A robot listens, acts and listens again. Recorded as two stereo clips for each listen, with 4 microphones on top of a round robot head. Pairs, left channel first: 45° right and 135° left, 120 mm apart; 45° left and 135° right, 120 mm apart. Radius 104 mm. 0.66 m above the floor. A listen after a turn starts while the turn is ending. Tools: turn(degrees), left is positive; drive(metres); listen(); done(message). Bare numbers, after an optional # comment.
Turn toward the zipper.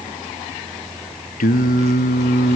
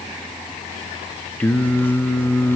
listen()
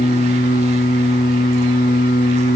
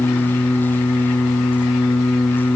listen()
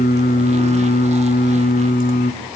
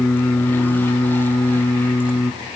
done("I can't make out a zipper to turn to.")